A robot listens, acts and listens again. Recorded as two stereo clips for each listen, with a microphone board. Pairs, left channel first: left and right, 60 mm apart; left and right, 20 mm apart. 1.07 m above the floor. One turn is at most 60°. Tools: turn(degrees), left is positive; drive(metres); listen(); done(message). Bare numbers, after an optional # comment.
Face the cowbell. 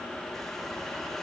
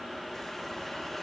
listen()
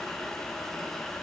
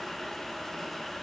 listen()
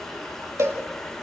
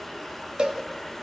# The cowbell: about 50° right or 130° right.
turn(-50)
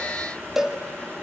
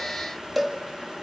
done("Found it: a cowbell, straight ahead, 2 to 4 m away.")